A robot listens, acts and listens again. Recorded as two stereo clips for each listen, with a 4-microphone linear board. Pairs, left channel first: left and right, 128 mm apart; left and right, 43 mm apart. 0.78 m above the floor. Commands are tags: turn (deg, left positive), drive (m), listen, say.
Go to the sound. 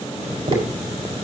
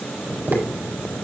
<turn deg="-50"/>
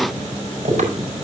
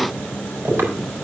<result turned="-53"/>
<turn deg="-75"/>
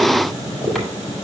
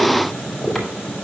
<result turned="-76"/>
<drive m="1.0"/>
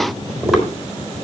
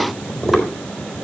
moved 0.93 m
<drive m="1.0"/>
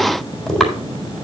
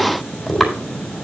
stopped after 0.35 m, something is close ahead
<say>Blocked. The tapping is further on, straight ahead.</say>